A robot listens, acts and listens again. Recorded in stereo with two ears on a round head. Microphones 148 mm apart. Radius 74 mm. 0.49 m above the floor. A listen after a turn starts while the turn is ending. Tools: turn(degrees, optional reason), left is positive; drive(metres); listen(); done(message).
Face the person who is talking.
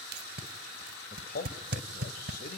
turn(degrees=55, reason="The man speaking: about 55° left or 125° left.")
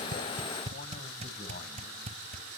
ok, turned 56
turn(degrees=50, reason="So it is at 50° left.")
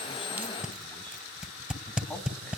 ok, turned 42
listen()
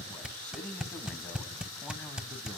turn(degrees=10, reason="The man speaking is now 10° left.")
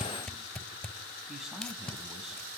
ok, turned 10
done("Facing the man speaking, over 4 m away.")